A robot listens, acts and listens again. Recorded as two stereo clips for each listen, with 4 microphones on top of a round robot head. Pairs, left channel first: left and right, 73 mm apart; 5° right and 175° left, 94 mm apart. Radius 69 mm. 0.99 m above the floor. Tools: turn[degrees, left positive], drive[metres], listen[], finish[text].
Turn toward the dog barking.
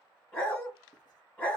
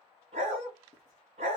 Thought: The dog barking: 160° left.
Action: turn[160]
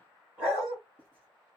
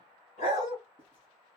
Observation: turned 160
Thought: The dog barking is now 15° right.
Action: turn[-15]
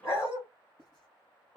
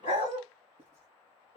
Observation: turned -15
Action: finish[Facing the dog barking.]